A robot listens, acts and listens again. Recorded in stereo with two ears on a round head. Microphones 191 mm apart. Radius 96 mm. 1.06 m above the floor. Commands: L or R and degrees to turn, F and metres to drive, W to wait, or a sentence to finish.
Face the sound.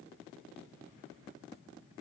W
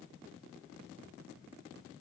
W
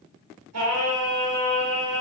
R90
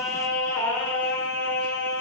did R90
Found it: singing, straight ahead.